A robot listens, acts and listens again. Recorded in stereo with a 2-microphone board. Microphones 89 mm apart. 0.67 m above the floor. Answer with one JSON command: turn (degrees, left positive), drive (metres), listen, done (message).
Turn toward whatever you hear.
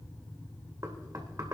{"turn": -40}
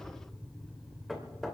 {"done": "Found it: knocking, straight ahead."}